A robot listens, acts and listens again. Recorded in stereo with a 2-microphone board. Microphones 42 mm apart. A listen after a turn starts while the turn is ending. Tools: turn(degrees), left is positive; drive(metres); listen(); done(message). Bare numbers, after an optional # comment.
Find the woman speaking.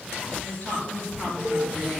# The woman speaking: about 40° left or 140° left.
turn(40)
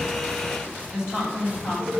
# So it is at 115° left.
turn(115)
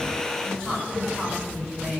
# The woman speaking is now 15° left.
turn(15)
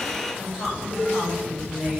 done("Facing the woman speaking.")